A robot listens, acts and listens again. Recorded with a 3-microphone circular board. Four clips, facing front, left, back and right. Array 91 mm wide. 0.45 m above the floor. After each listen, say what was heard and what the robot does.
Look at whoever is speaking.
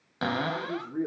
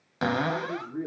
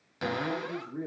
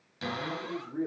Facing the man speaking.